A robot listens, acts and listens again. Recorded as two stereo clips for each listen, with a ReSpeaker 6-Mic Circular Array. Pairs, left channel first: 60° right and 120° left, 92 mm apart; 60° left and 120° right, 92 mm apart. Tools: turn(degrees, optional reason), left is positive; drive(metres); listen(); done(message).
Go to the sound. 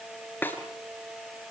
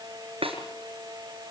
turn(degrees=-130, reason="The snare drum: 130° right.")
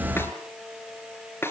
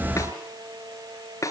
drive(metres=1.0)
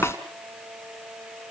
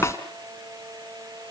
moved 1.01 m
listen()
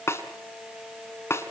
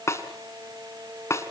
drive(metres=1.0)
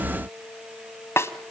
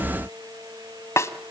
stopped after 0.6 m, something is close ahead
done("I am next to the snare drum.")